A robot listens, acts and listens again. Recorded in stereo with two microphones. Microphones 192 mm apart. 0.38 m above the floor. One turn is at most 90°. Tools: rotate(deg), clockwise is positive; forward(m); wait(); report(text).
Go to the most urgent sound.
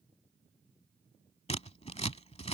wait()
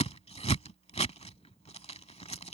wait()
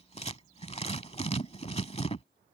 report("I can't make out anything urgent to turn to.")